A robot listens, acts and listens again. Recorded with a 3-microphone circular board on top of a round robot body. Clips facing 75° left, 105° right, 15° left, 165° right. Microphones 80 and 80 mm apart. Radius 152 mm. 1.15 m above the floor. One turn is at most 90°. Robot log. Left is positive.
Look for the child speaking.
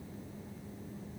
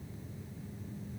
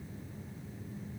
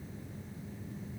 cmd idle
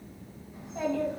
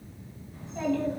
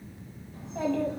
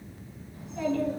end: Facing the child speaking.